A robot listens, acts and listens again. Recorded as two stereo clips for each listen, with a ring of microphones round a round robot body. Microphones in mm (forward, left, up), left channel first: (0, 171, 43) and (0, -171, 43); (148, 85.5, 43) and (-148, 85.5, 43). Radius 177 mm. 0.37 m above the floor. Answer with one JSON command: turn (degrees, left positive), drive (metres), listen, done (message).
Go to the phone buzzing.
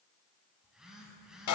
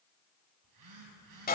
{"turn": 180}
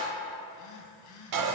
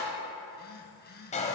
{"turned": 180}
{"turn": 55}
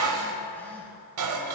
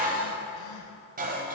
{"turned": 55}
{"listen": true}
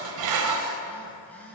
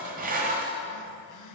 {"drive": 1.0}
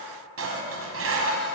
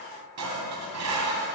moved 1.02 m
{"listen": true}
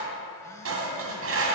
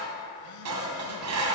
{"listen": true}
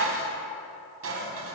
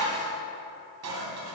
{"done": "I heard a phone buzzing from this way, but can't make it out now. I did not reach it."}